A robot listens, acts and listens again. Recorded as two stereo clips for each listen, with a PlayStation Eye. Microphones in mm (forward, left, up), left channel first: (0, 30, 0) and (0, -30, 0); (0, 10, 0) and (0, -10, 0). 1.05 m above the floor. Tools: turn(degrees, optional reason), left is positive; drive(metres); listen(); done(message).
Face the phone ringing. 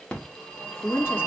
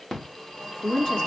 turn(degrees=15, reason="The phone ringing: about 15° left or 165° left.")
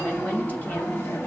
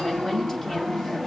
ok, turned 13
turn(degrees=150, reason="So it is at 150° left.")
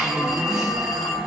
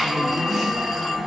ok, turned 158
turn(degrees=-10, reason="The phone ringing is now 10° right.")
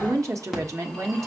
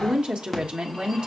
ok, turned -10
done("Found it: a phone ringing, straight ahead.")